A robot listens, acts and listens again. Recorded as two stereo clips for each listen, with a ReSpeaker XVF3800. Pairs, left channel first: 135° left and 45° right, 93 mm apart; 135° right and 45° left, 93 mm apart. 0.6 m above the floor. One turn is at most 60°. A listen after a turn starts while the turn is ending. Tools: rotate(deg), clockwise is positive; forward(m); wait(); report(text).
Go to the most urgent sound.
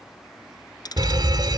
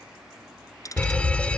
rotate(60)
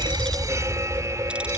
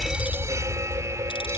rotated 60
forward(1.0)
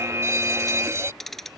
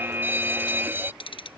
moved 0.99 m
forward(1.0)
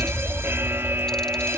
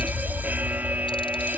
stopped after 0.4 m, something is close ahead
rotate(10)
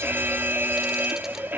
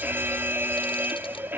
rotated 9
report("I am next to the fire alarm.")